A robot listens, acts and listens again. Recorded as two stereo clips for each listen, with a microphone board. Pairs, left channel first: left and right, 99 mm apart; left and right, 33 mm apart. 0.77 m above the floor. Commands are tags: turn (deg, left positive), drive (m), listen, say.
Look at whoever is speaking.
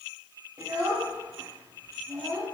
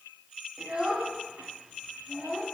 <turn deg="-30"/>
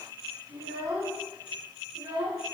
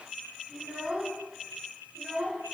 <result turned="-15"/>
<turn deg="-135"/>
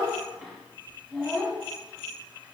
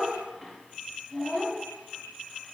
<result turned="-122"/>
<turn deg="-10"/>
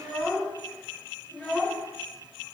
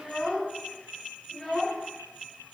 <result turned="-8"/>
<say>Facing the child speaking, under 1 m away.</say>